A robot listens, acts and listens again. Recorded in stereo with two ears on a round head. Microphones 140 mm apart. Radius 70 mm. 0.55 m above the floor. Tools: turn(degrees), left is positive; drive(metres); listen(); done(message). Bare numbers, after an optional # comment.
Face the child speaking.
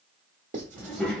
turn(30)
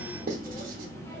# The child speaking: about 15° left or 165° left.
turn(15)
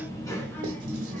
turn(30)
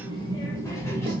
# So it is at 165° left.
turn(165)
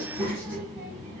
# The child speaking is now 20° right.
turn(-20)
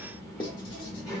done("Found it: a child speaking, straight ahead, 1 to 2 m away.")